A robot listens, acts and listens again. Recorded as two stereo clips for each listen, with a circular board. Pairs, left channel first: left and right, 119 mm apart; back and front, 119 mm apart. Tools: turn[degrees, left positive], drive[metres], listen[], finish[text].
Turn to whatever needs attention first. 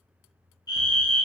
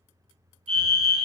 Thought: The fire alarm: 35° left.
Action: turn[35]
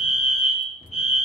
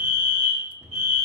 Action: finish[Facing the fire alarm, 1 to 2 m away.]